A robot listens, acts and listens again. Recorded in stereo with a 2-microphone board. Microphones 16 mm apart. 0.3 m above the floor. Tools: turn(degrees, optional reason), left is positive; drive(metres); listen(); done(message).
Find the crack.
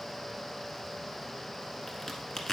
turn(degrees=20, reason="The crack: about 20° left or 160° left.")
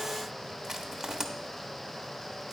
listen()
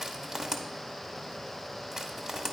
done("I heard a crack, but can't make it out now. It was about straight ahead or 140° left.")